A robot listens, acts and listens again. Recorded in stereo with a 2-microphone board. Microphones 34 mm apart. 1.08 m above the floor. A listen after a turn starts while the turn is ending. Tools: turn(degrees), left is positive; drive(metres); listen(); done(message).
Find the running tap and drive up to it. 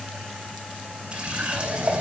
turn(degrees=-40)
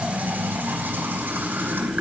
turn(degrees=-100)
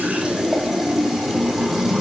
listen()
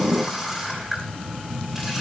drive(metres=1.0)
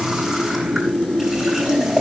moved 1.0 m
drive(metres=1.0)
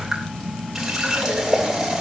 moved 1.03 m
turn(degrees=-10)
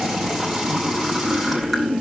drive(metres=1.0)
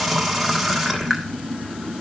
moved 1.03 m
drive(metres=1.0)
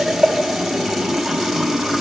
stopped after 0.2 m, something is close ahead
done("Arrived at the running tap, straight ahead.")